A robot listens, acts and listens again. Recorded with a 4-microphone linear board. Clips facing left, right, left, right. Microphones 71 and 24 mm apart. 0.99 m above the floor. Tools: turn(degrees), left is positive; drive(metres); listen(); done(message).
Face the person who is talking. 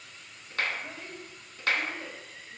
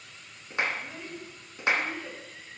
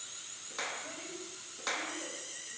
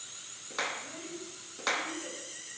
turn(degrees=90)
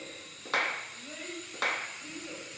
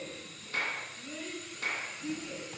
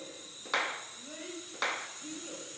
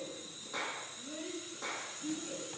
turn(degrees=30)
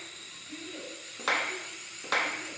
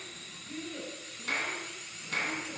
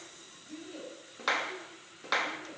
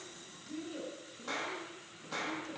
turn(degrees=10)
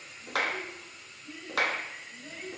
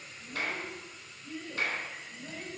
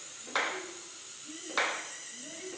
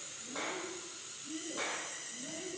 done("Found it: a child speaking, straight ahead.")